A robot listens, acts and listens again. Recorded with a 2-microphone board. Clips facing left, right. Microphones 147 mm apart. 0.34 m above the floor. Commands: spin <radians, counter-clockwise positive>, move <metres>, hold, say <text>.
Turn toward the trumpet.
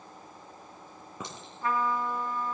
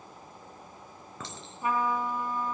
spin -0.26
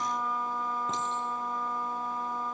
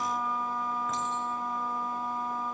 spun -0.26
say Facing the trumpet, 2 to 4 m away.